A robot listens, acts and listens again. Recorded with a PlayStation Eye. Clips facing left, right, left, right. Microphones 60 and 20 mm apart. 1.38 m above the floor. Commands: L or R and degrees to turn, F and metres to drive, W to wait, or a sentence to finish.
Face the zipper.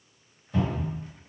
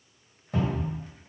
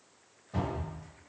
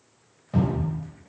W
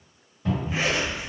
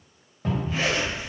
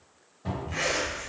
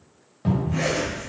L20
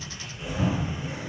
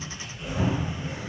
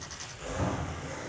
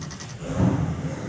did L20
Found it: a zipper, straight ahead.